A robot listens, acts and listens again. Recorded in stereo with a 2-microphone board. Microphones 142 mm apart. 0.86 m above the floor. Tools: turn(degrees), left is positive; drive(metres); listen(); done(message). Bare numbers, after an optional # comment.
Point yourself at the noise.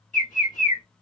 # The bird: about 70° left or 110° left.
turn(70)
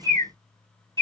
# So it is at 25° left.
turn(25)
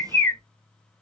# The bird is now 20° left.
turn(20)
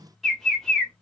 done("Found it: a bird, straight ahead.")